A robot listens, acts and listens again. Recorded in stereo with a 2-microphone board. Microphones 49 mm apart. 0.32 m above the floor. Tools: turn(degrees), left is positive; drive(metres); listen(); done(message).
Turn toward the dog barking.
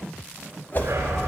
turn(degrees=-70)
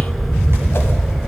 done("Facing the dog barking.")